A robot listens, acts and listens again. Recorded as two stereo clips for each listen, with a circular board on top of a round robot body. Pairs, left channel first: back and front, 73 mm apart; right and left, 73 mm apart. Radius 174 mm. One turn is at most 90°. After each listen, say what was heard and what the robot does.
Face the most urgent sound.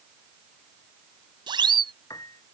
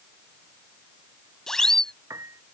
Facing the siren.